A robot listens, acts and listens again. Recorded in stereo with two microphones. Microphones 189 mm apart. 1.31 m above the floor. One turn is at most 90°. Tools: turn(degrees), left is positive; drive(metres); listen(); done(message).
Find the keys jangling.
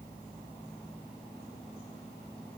listen()
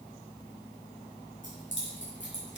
turn(degrees=90)
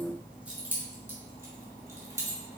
turn(degrees=-15)
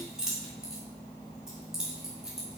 done("Facing the keys jangling, 2 to 4 m away.")